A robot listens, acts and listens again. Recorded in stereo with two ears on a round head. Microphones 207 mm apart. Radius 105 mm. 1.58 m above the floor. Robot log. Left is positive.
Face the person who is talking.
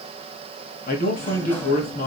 note: The man speaking: about 45° left or 135° left.
cmd yaw +45
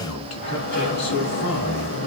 note: So it is at 90° left.
cmd yaw +90
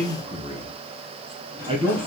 note: The man speaking is now 25° right.
cmd yaw -25
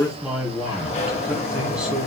end: Found it: a man speaking, straight ahead.